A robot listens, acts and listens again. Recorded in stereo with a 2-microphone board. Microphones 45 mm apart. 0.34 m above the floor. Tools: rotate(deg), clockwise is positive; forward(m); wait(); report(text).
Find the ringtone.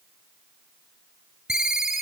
rotate(30)
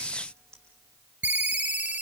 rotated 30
rotate(145)
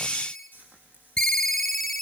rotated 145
report("Found it: a ringtone, straight ahead.")